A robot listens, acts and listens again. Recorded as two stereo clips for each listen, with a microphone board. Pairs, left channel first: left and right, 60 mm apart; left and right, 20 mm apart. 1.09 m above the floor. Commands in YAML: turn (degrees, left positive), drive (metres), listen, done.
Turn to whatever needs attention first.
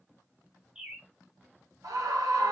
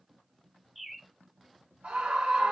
turn: -90
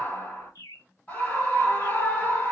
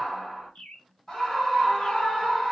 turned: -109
turn: 20
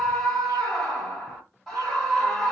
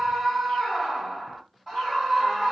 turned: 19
done: "Found it: a scream, straight ahead."